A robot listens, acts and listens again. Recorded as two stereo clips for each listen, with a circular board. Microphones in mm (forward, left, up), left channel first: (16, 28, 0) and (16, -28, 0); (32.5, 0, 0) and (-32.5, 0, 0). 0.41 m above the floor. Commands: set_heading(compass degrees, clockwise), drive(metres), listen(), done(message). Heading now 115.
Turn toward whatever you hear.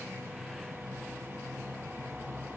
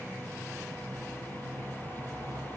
listen()
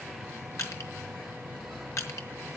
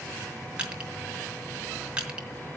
set_heading(5)
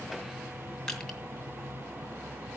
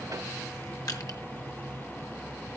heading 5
listen()
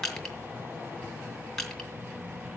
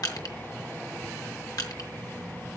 set_heading(355)
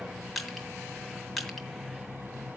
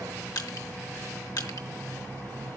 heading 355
done("Facing the crushing.")